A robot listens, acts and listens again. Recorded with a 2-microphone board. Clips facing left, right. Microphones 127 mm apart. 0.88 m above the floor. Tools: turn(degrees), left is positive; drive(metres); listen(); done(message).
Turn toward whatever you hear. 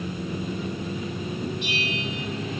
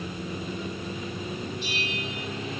turn(degrees=65)
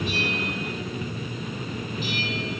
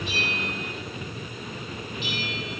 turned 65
turn(degrees=45)
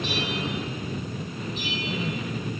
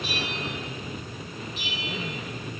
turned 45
done("Facing the bell, over 4 m away.")